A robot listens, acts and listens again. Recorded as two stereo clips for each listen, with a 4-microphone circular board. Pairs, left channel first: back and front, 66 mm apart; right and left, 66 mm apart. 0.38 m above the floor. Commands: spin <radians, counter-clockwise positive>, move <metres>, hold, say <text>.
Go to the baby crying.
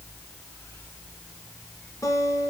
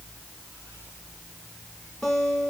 hold
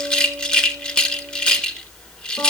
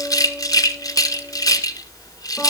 hold
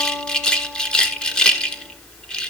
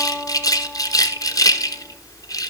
say I can't make out a baby crying, only a guitar and a rattle.